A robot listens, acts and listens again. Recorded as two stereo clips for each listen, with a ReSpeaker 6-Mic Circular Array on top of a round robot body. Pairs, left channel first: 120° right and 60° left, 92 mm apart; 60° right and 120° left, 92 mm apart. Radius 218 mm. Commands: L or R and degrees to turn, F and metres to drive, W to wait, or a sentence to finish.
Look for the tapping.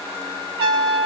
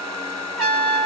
W
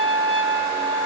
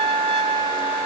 W
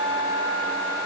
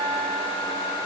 I can't make out tapping to turn to.